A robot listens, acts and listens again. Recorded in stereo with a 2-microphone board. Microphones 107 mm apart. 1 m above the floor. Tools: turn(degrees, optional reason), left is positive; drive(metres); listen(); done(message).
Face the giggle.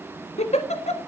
turn(degrees=90)
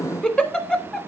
turn(degrees=10, reason="So it is at 10° left.")
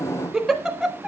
done("Found it: a giggle, straight ahead.")